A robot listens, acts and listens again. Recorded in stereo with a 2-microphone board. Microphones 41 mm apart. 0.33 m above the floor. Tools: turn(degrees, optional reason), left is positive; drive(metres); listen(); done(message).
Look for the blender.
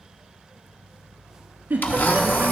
turn(degrees=55, reason="The blender: about 55° left or 125° left.")
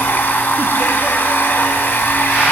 turn(degrees=70, reason="So it is at 70° left.")
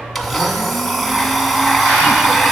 done("Found it: a blender, straight ahead, 1 to 2 m away.")